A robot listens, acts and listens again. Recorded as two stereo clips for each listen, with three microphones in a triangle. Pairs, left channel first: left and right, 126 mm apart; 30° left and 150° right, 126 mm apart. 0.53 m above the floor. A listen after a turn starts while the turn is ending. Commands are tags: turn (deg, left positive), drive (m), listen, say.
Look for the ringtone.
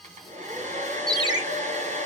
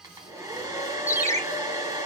<turn deg="-35"/>
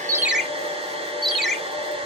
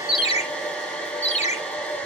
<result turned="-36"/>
<say>Found it: a ringtone, straight ahead.</say>